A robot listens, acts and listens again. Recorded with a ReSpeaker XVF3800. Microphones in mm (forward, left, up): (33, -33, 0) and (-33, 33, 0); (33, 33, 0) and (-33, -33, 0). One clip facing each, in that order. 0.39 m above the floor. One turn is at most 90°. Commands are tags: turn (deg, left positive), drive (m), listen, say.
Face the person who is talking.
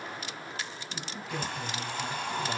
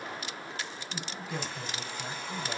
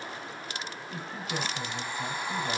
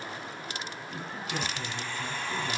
<turn deg="60"/>
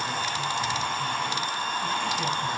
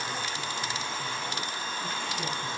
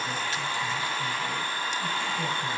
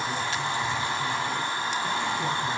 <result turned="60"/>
<listen/>
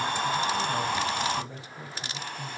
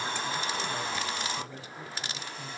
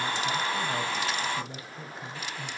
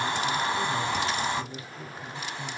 <turn deg="20"/>
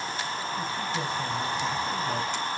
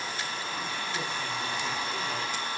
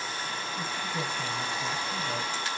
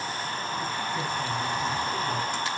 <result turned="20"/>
<listen/>
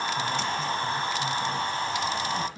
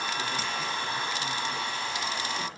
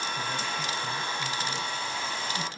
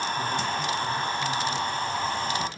<listen/>
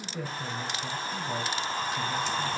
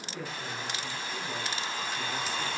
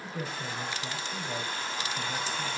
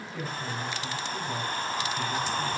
<say>Facing the man speaking, 2 to 4 m away.</say>